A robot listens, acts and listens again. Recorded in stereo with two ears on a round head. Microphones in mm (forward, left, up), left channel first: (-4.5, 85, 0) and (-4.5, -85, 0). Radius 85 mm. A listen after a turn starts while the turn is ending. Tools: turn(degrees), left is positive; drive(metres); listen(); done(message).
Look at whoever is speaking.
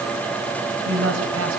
turn(degrees=-90)
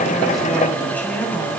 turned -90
turn(degrees=10)
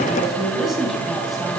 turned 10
done("Facing the woman speaking, over 4 m away.")